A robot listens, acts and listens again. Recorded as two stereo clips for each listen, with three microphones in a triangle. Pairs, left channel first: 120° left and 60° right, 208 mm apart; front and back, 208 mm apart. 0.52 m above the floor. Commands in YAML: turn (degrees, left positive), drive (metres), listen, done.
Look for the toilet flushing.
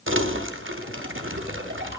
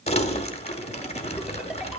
listen: true
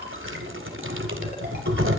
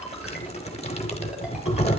listen: true
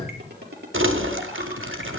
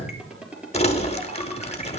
done: "I can't make out a toilet flushing to turn to."